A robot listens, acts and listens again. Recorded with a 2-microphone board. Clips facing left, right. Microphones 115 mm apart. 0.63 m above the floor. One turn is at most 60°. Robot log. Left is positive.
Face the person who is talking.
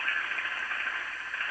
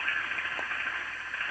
cmd idle
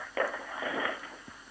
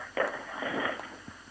cmd idle
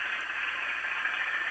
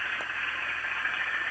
end: I can't make out anyone speaking.